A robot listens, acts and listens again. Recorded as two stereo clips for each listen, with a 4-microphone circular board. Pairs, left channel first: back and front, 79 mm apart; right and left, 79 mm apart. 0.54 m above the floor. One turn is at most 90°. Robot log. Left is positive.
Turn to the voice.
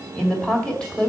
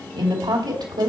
note: The woman speaking: 100° left.
cmd yaw +90
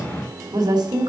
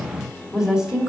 note: The woman speaking is now 10° left.
cmd yaw +10
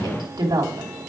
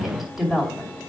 end: Found it: a woman speaking, straight ahead, 2 to 4 m away.